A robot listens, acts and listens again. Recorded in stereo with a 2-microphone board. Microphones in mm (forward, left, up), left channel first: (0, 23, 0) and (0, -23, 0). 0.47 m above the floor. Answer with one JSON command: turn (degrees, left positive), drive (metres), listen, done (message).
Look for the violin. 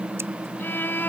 {"turn": 50}
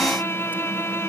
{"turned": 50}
{"turn": 80}
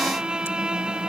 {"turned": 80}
{"turn": -20}
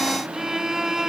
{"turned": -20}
{"done": "Found it: a violin, straight ahead."}